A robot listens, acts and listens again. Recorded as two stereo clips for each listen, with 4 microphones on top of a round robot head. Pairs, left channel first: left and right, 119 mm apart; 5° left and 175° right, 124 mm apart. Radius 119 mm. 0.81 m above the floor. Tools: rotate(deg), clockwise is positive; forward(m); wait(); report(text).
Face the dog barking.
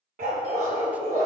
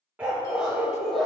rotate(85)
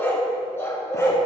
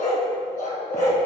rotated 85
rotate(-25)
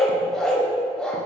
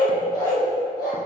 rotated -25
rotate(-10)
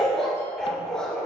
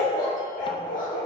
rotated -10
rotate(-10)
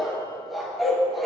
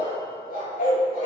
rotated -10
report("Found it: a dog barking, straight ahead, 2 to 4 m away.")